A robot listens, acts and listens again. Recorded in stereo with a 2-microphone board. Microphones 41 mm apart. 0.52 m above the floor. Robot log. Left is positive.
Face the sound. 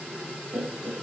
note: The laughter: about 65° right or 115° right.
cmd yaw -65
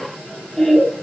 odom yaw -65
note: So it is at 10° left.
cmd yaw +10
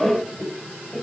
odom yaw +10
note: The laughter is now 10° left.
cmd yaw +10
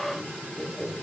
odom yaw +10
note: The laughter is now 15° left.
cmd yaw +15
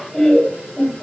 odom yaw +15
note: The laughter is now 15° left.
cmd yaw +15
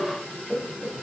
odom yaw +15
note: The laughter is now 15° left.
cmd yaw +15
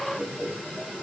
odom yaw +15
end: Facing the laughter.